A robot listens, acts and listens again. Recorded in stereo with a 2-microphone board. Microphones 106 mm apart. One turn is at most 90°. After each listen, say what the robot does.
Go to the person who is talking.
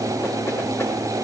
Keep listening.
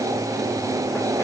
Keep listening.
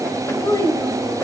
Turn 30° left.
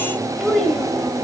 Drive 1.0 m forward.
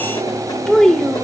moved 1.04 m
Drive 1.0 m forward.
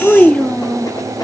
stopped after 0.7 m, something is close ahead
Turn 10° left.
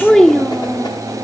I am next to the child speaking.